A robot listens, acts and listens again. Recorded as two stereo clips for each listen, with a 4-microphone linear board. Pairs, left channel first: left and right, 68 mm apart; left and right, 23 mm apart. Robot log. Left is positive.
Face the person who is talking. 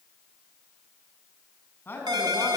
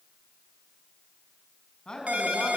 note: The man speaking: about 30° left or 150° left.
cmd yaw +30
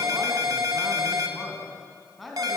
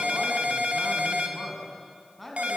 end: Facing the man speaking.